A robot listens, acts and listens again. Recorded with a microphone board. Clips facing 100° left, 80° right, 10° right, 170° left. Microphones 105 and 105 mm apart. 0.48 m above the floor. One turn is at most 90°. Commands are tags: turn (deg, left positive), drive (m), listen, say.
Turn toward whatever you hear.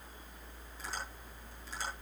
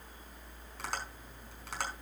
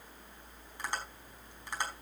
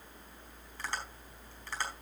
<turn deg="-85"/>
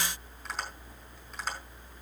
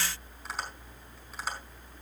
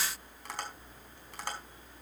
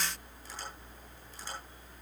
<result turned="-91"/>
<say>Facing the tapping.</say>